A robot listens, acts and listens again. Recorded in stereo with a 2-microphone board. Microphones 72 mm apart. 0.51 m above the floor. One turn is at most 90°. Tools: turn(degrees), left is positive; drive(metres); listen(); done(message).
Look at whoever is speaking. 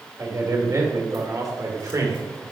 turn(degrees=-50)
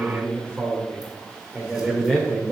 done("Found it: a man speaking, straight ahead, 1 to 2 m away.")